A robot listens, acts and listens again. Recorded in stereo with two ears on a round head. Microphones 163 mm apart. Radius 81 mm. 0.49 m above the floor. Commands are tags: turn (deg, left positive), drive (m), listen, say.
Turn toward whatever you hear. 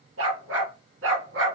<turn deg="-75"/>
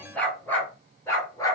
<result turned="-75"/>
<turn deg="20"/>
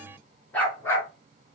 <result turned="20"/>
<turn deg="15"/>
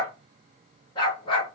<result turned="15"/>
<turn deg="30"/>
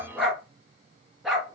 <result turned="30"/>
<say>Found it: a dog barking, straight ahead, 2 to 4 m away.</say>